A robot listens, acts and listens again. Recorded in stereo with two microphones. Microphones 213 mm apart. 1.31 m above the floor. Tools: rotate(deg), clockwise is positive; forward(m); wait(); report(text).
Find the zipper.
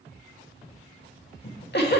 wait()
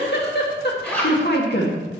rotate(-30)
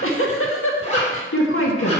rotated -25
rotate(-145)
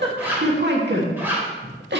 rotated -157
rotate(10)
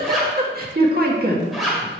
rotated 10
report("Facing the zipper, 2 to 4 m away.")